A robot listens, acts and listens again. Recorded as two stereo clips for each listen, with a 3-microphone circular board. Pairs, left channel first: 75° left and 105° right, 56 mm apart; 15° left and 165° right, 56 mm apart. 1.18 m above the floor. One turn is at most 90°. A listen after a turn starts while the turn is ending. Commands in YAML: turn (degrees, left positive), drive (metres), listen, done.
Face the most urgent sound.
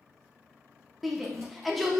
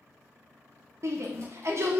turn: 90
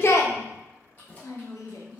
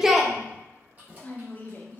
turn: 75
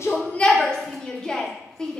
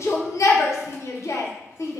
done: "Facing the shout, under 1 m away."